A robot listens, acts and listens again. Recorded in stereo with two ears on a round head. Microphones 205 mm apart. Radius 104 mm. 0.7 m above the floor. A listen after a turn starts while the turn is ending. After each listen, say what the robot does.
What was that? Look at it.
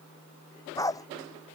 Turn 15° left.
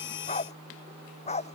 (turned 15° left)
Turn 150° left.
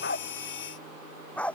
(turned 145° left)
Found it: a dog barking, straight ahead.